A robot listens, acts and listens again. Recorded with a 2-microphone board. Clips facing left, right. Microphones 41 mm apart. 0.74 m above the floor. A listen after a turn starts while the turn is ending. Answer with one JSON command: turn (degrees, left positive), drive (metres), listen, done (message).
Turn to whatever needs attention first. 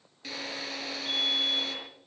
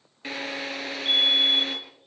{"turn": -55}
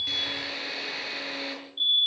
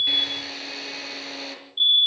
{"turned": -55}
{"turn": -50}
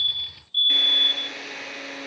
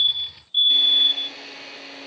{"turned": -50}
{"turn": -20}
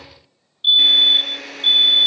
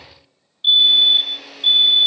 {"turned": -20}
{"done": "Facing the fire alarm."}